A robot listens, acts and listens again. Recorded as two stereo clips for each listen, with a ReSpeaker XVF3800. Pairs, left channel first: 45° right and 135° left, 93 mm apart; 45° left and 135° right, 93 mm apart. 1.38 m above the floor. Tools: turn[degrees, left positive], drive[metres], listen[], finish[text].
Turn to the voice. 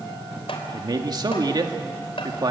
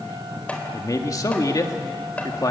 Thought: The man speaking: 95° left.
Action: turn[95]
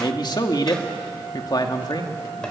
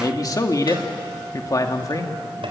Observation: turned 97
Action: finish[Found it: a man speaking, straight ahead, 2 to 4 m away.]